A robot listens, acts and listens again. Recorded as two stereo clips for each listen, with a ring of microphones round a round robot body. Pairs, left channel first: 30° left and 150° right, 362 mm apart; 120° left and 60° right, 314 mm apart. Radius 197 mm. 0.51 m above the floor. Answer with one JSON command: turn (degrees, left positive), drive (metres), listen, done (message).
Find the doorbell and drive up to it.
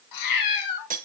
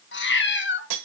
{"listen": true}
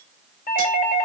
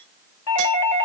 {"turn": 95}
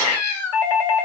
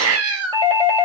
{"turn": 15}
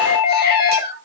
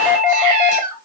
{"drive": 1.0}
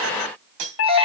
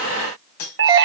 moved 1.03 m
{"turn": -15}
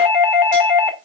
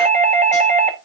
{"drive": 1.0}
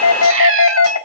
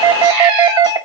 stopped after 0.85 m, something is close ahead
{"turn": 10}
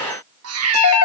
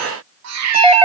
{"done": "I am next to the doorbell."}